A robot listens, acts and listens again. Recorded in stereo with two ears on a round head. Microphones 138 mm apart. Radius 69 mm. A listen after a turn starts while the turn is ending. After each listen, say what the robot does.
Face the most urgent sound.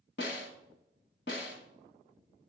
Keep listening.
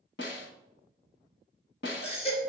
Turn 40° left.
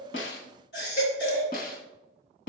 Turn 100° left.
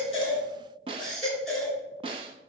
Facing the baby crying.